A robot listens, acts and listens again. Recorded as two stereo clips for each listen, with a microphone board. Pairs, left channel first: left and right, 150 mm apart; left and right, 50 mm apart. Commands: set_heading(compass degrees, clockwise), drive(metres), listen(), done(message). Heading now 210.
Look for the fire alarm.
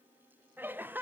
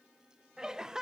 listen()
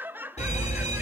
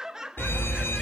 set_heading(160)
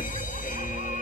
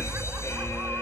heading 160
set_heading(85)
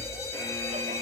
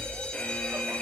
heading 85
set_heading(65)
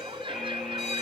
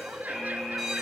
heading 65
done("Found it: a fire alarm, straight ahead.")